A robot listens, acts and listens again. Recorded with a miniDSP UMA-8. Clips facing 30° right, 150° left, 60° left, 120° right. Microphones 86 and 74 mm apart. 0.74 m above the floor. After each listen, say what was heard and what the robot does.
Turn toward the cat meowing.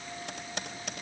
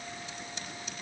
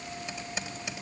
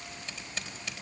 Keep listening.
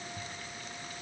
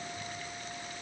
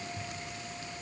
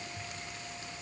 Keep listening.
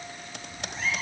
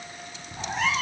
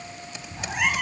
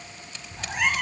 The cat meowing: 145° left. Turn 145° left.
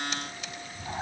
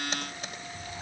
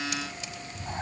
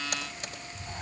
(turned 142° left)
Found it: a cat meowing, straight ahead, 1 to 2 m away.